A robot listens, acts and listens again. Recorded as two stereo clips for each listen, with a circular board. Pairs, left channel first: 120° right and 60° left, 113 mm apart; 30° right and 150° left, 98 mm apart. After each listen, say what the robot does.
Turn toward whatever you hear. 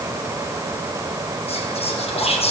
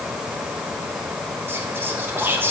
Turn 140° right.
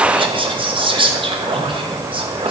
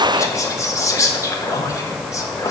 Turn 25° left.
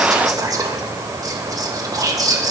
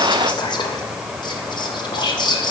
Facing the whispering, under 1 m away.